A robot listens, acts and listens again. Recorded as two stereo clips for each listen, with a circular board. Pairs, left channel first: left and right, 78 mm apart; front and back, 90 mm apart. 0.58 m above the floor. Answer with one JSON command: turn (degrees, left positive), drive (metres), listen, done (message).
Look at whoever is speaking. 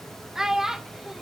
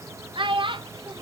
{"turn": -170}
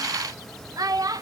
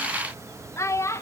{"turn": -55}
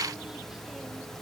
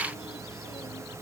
{"listen": true}
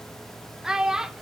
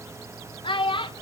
{"turn": -10}
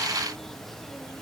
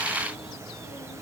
{"listen": true}
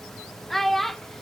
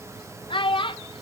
{"done": "Found it: a child speaking, straight ahead, under 1 m away."}